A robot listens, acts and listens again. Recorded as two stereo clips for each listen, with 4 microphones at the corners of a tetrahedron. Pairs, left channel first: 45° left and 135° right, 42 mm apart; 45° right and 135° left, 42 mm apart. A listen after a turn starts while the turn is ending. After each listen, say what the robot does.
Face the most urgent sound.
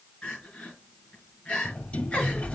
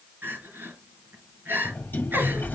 Turn 105° left.
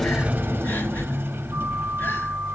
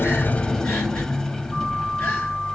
Keep listening.
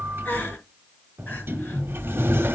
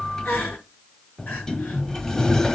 Facing the crying.